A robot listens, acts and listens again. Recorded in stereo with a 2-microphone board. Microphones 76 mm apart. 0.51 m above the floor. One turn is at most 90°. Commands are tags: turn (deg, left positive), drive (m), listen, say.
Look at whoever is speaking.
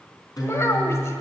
<turn deg="40"/>
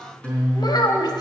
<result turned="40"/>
<turn deg="90"/>
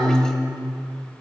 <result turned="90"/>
<turn deg="10"/>
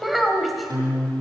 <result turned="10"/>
<say>Facing the child speaking, 2 to 4 m away.</say>